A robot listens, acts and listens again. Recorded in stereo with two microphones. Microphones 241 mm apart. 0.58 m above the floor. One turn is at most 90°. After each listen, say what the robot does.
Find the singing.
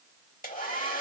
Keep listening.
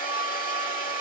Keep listening.
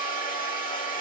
I can't make out singing to turn to.